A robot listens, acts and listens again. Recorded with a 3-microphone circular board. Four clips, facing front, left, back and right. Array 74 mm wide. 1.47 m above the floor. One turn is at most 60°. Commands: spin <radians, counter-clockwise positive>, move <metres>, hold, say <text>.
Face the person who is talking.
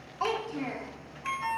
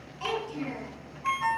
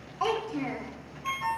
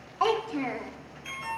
spin -1.05
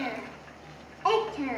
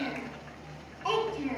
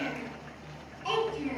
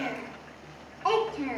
spin -0.44
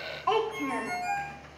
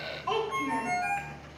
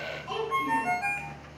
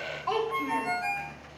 say Found it: a child speaking, straight ahead.